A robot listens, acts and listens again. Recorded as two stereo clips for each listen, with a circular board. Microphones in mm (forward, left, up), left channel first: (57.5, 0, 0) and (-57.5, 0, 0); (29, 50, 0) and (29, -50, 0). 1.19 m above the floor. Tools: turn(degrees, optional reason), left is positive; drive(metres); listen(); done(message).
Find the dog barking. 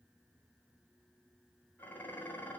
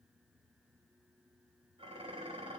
listen()
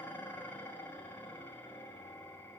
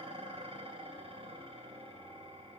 listen()
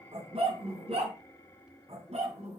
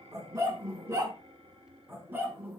turn(degrees=-155, reason="The dog barking: 155° right.")
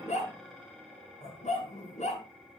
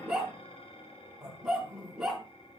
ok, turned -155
done("Facing the dog barking, over 4 m away.")